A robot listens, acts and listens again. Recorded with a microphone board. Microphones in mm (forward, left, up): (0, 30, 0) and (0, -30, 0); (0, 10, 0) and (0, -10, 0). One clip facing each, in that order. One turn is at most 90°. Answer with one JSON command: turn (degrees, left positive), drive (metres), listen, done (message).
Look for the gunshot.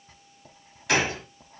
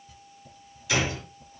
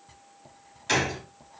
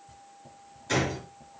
{"turn": 60}
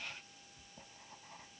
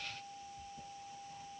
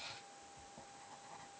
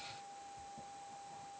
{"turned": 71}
{"listen": true}
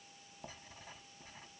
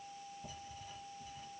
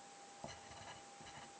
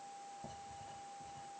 {"done": "I heard a gunshot, but can't make it out now. It was about 10° right or 45° left."}